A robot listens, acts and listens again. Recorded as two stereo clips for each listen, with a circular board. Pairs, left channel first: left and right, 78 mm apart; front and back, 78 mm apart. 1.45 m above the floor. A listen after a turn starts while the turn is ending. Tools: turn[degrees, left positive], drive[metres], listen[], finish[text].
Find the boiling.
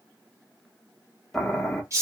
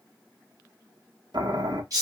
Thought: The boiling: 175° left.
Action: turn[175]
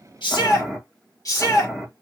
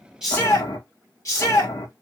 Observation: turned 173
Action: finish[Found it: boiling, straight ahead.]